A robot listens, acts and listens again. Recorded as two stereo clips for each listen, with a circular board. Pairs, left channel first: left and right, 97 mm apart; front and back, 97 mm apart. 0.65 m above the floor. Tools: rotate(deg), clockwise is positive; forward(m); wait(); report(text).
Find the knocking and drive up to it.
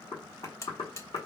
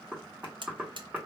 rotate(-100)
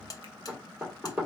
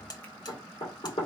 forward(1.0)
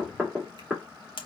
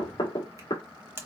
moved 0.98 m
rotate(10)
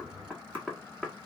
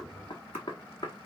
forward(1.0)
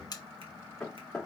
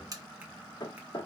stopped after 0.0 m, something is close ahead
report("Arrived at the knocking, straight ahead.")